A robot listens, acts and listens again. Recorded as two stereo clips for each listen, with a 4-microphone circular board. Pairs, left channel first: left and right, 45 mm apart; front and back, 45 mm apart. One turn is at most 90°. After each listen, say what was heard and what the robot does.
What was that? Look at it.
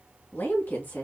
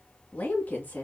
The woman speaking: 45° left. Turn 45° left.
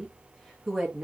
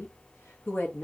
The woman speaking is now 10° right. Turn 10° right.
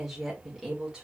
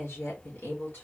The woman speaking is now 20° right. Turn 20° right.
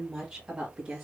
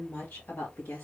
The woman speaking is now 15° right. Turn 15° right.
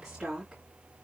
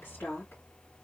The woman speaking is now 10° right. Turn 10° right.
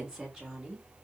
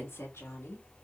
Found it: a woman speaking, straight ahead, 2 to 4 m away.